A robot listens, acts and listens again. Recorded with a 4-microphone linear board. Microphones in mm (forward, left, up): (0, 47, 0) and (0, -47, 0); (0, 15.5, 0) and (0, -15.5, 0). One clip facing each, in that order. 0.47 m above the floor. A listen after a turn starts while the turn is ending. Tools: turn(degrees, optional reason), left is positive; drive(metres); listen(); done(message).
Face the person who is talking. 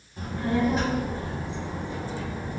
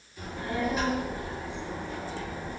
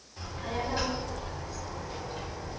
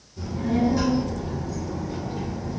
turn(degrees=30)
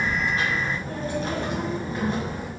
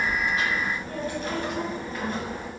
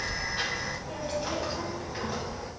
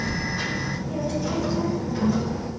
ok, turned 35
turn(degrees=20, reason="The child speaking: about 20° left or 160° left.")
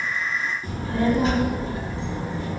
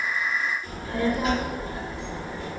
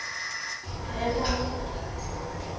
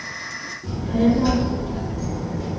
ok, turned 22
turn(degrees=25, reason="The child speaking: about 25° left or 155° left.")
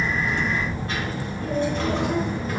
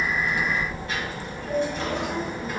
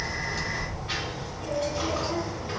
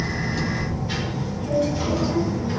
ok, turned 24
turn(degrees=130, reason="So it is at 130° left.")
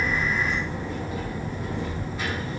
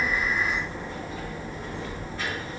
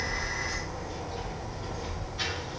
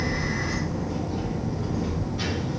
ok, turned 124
done("Facing the child speaking.")